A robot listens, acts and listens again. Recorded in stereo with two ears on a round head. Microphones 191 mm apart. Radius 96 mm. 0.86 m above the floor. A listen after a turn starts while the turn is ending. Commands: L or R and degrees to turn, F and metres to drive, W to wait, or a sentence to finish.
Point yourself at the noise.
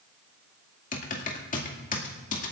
L40
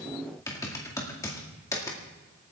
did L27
L15
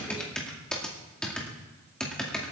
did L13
Found it: typing on a keyboard, straight ahead.